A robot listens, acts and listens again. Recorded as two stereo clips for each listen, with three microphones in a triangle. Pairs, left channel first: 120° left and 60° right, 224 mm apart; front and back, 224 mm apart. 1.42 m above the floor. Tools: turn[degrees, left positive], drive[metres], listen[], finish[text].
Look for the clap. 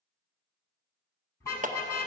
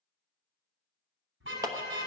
Thought: The clap: 105° right.
Action: turn[-105]
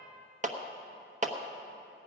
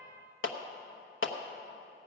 Action: finish[Found it: a clap, straight ahead, 1 to 2 m away.]